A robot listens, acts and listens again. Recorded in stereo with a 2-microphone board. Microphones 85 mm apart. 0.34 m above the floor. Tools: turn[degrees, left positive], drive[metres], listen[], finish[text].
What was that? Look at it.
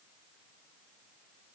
Action: listen[]
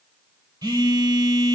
Thought: The phone buzzing: about 45° right or 135° right.
Action: turn[-45]
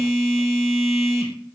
Action: finish[Found it: a phone buzzing, straight ahead.]